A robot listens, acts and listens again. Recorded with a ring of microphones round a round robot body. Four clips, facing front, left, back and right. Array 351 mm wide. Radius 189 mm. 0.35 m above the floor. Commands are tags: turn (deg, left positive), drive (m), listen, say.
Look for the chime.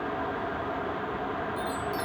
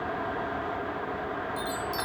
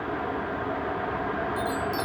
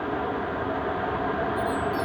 <turn deg="120"/>
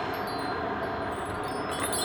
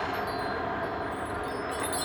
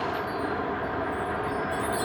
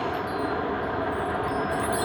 <say>Facing the chime, under 1 m away.</say>